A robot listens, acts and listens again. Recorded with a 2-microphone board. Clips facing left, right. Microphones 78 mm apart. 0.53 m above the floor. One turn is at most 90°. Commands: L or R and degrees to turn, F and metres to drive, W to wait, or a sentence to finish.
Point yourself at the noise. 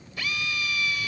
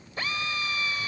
R35
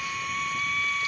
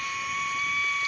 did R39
Found it: a drill, straight ahead.